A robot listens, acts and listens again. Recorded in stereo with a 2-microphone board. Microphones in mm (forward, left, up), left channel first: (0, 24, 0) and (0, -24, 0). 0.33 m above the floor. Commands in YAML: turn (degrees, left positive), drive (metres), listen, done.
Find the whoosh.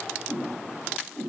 turn: -30
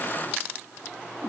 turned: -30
turn: 25
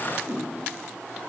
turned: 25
done: "Found it: a whoosh, straight ahead."